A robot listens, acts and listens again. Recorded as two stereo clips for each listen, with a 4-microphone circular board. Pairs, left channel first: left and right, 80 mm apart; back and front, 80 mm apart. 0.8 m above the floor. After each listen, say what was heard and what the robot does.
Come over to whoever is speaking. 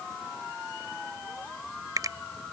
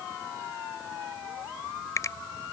Keep listening.
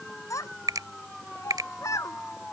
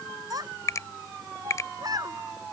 The child speaking: 40° left. Turn 40° left.
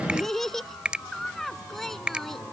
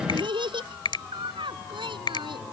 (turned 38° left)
Drive 1.0 m forward.
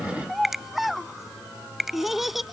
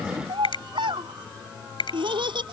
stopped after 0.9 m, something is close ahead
Something is in my way. I am facing the child speaking but have not reached it.